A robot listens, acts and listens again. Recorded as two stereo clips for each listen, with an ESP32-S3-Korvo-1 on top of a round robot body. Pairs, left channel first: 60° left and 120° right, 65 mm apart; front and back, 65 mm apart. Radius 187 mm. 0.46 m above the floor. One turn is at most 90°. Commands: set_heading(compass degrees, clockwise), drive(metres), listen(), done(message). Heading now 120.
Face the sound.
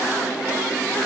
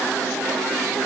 listen()
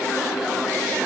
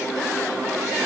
listen()
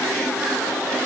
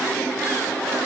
done("I can't make out anything.")